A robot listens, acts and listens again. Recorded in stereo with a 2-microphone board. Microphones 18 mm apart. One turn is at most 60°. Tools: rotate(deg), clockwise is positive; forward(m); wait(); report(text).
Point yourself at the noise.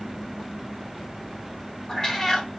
rotate(-30)
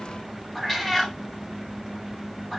report("Facing the cat meowing.")